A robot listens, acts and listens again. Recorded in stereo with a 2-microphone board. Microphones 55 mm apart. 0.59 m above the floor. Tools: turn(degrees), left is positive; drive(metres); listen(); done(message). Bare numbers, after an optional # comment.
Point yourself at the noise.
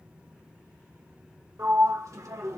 # The sliding door: about 70° right or 110° right.
turn(-70)
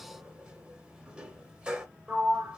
# So it is at 20° right.
turn(-20)
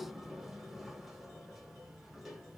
listen()
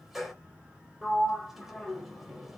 done("Found it: a sliding door, straight ahead.")